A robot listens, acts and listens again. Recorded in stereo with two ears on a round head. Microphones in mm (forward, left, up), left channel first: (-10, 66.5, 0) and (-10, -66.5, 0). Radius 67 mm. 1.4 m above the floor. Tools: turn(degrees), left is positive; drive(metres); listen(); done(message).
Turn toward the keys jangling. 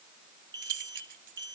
turn(degrees=-60)
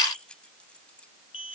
done("Facing the keys jangling.")